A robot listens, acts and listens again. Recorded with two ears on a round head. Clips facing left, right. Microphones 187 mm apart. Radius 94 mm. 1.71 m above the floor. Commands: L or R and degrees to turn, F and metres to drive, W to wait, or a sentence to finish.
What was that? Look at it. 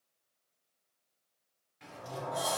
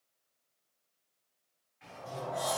L55
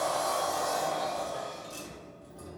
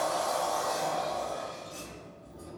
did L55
L70
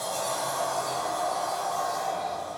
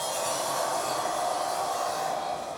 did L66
Facing the sliding door, 1 to 2 m away.